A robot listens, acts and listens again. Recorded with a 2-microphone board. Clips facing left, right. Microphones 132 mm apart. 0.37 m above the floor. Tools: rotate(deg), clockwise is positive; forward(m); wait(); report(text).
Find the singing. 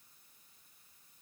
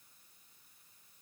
wait()
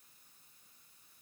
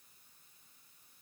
wait()
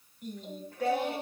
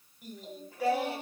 rotate(30)
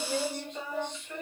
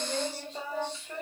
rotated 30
rotate(145)
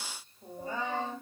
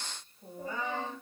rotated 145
rotate(-30)
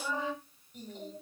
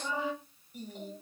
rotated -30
rotate(10)
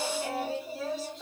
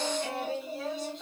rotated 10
report("Facing the singing.")